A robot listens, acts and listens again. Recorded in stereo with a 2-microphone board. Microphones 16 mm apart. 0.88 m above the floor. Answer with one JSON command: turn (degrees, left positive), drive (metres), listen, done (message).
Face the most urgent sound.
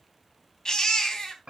{"turn": 45}
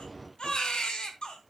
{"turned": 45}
{"turn": 90}
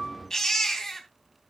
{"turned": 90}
{"turn": 35}
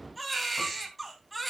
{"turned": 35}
{"turn": 10}
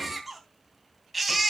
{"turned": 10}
{"done": "Facing the baby crying, 2 to 4 m away."}